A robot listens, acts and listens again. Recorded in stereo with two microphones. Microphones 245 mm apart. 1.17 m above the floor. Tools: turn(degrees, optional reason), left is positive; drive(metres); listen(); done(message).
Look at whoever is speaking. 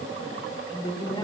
turn(degrees=20, reason="The woman speaking: about 20° left or 160° left.")
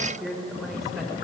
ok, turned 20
turn(degrees=30)
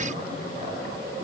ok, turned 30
listen()
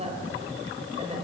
turn(degrees=-25, reason="So it is at 25° right.")
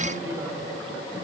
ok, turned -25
listen()
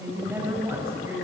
turn(degrees=-10, reason="The woman speaking is now 10° right.")
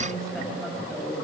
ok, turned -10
done("Facing the woman speaking.")